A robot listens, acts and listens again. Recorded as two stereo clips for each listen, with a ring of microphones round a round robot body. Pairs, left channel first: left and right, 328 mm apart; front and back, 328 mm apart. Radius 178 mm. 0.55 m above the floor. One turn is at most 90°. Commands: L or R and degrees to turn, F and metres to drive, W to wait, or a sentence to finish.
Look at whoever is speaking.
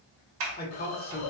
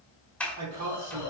L90
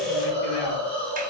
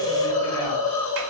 L55
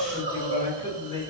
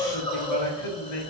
L15
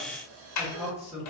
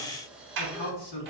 Found it: a man speaking, straight ahead, 1 to 2 m away.